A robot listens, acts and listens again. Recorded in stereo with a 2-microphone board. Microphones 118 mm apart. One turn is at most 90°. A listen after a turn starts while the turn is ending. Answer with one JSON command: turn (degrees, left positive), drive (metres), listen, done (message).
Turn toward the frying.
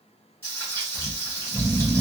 {"turn": 25}
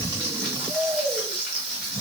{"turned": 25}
{"done": "Facing the frying."}